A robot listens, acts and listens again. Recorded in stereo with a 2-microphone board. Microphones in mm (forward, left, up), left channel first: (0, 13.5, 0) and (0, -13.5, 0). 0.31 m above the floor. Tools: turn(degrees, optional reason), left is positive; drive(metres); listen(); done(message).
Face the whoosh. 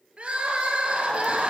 listen()
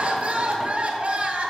listen()
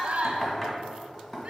done("I can't make out a whoosh, only knocking and crying.")